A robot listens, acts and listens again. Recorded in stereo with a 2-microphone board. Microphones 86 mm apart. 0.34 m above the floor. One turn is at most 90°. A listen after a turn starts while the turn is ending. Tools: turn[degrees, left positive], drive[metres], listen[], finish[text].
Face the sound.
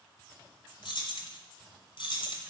Thought: The keys jangling: about 70° left or 110° left.
Action: turn[70]
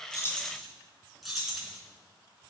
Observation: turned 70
Action: finish[Found it: keys jangling, straight ahead, 2 to 4 m away.]